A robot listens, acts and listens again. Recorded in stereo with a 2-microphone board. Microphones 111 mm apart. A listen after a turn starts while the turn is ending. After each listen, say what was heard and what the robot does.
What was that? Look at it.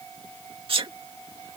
The sneeze: about 55° right or 125° right. Turn 55° right.
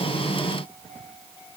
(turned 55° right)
Keep listening.
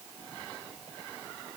I heard a sneeze, but can't make it out now. It was about straight ahead or 70° right.